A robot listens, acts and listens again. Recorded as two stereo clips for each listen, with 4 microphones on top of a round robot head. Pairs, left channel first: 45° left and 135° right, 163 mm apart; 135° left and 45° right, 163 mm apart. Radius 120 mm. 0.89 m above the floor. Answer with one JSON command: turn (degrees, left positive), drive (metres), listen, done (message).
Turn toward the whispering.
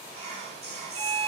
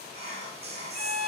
{"turn": -90}
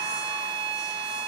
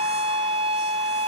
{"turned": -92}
{"listen": true}
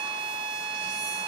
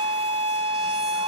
{"listen": true}
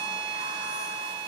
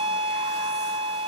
{"done": "I heard whispering from this way, but can't make it out now."}